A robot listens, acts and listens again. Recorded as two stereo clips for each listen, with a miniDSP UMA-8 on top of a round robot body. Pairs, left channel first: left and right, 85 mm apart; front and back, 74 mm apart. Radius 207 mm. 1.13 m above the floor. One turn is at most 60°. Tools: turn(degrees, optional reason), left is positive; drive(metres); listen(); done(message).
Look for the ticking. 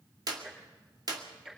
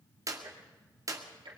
turn(degrees=-60, reason="The ticking: 175° right.")
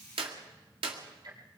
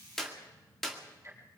turn(degrees=-60, reason="The ticking is now 125° right.")
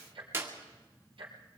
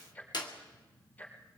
turn(degrees=-60, reason="The ticking is now 65° right.")
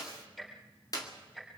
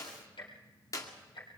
done("Facing the ticking, 2 to 4 m away.")